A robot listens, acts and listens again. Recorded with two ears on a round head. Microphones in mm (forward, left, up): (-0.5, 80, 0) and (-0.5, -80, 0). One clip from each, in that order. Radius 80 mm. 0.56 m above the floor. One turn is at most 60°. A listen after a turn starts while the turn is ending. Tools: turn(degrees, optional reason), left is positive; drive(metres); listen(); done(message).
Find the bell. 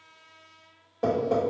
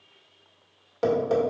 listen()
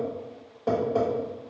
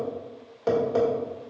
listen()
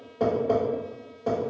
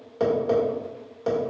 done("I can't make out a bell, only tapping.")